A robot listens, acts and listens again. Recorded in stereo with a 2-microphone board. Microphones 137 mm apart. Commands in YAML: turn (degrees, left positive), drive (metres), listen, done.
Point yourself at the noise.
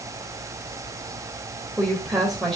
turn: 30
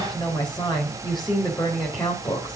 turn: 145
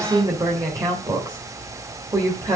turn: -25
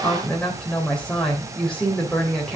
done: "Facing the woman speaking."